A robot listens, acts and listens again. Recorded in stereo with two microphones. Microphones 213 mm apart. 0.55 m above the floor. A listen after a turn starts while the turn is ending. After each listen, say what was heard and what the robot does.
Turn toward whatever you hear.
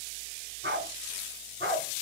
Turn 90° right.
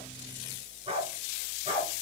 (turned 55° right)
So it is at 35° right. Turn 35° right.
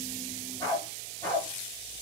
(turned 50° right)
The dog barking is now 10° left. Turn 10° left.
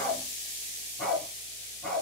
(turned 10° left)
Found it: a dog barking, straight ahead, over 4 m away.